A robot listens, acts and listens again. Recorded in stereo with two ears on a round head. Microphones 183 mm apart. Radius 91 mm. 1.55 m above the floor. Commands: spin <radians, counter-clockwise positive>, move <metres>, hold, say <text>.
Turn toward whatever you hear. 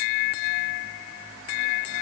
hold
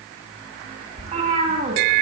spin -0.61
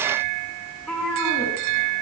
say Facing the cat meowing, over 4 m away.